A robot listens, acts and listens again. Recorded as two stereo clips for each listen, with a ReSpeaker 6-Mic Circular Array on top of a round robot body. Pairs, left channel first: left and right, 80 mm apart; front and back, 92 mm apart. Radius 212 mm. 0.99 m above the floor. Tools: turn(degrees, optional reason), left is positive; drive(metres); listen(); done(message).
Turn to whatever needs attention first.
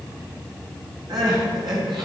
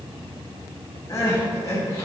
turn(degrees=-55, reason="The crying: 55° right.")
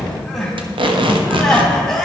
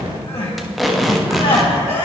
done("Facing the crying, 2 to 4 m away.")